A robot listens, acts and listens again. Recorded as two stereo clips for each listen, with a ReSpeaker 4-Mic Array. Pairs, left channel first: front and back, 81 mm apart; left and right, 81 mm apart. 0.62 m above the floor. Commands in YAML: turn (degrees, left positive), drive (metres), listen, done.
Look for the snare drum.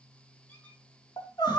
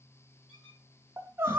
listen: true
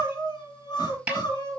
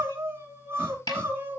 turn: 110
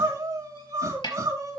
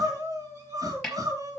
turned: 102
done: "Found it: a snare drum, straight ahead, over 4 m away."